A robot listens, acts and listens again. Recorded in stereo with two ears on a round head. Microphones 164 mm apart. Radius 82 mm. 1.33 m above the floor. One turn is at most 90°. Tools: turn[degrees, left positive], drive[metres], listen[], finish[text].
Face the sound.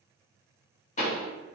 Thought: The pop: about 40° left or 140° left.
Action: turn[40]
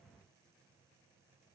Action: listen[]
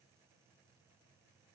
Action: finish[I heard a pop, but can't make it out now. It was about straight ahead or 100° left.]